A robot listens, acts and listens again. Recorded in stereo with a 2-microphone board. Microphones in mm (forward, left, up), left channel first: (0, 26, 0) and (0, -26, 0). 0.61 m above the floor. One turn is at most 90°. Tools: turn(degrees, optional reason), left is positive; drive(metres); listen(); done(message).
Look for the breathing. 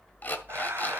turn(degrees=-60, reason="The breathing: about 60° right or 120° right.")
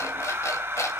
turn(degrees=-55, reason="So it is at 55° right.")
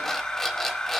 turn(degrees=15, reason="The breathing is now 15° left.")
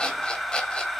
done("Facing the breathing.")